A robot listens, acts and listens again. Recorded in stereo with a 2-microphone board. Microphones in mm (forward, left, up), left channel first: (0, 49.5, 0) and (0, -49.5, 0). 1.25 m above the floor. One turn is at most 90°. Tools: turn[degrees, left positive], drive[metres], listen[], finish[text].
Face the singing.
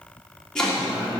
Action: turn[-30]
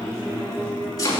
Thought: So it is at 145° right.
Action: turn[-90]
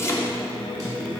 Thought: The singing is now 40° right.
Action: turn[-40]
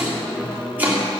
Action: finish[Found it: singing, straight ahead.]